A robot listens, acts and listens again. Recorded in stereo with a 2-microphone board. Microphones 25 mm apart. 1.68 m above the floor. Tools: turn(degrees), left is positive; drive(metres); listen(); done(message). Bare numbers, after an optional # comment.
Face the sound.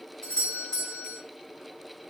# The doorbell: about 30° left or 150° left.
turn(30)
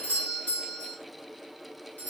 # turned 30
# So it is at 120° left.
turn(120)
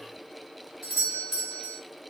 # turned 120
# The doorbell is now 10° left.
turn(10)
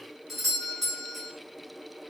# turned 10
done("Found it: a doorbell, straight ahead, 1 to 2 m away.")